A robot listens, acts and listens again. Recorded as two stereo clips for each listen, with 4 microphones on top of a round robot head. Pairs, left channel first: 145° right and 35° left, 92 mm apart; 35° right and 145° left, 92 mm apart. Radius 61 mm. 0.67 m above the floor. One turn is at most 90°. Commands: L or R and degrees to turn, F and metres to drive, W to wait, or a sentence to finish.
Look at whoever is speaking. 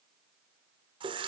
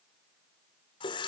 W
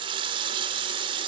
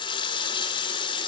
W
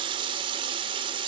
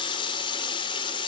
I can't make out anyone speaking to turn to.